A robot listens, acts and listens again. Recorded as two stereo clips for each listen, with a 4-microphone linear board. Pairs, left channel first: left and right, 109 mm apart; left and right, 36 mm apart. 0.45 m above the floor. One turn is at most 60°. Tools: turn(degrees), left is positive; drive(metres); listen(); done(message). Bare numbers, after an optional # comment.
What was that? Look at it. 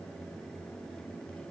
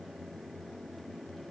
listen()
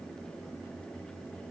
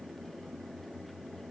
listen()
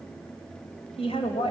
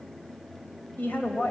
# The woman speaking: about 65° left or 115° left.
turn(60)
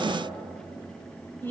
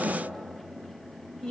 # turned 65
# So it is at 25° left.
turn(25)
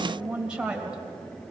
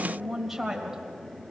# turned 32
# The woman speaking is now 10° right.
turn(-10)
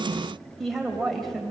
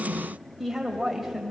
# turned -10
done("Found it: a woman speaking, straight ahead.")